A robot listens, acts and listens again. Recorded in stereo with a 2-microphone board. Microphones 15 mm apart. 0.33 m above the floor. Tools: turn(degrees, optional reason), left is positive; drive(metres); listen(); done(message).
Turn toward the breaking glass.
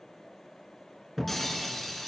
turn(degrees=30)
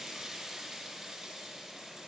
listen()
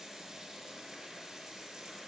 done("I heard breaking glass, but can't make it out now. It was about 15° right or 135° left.")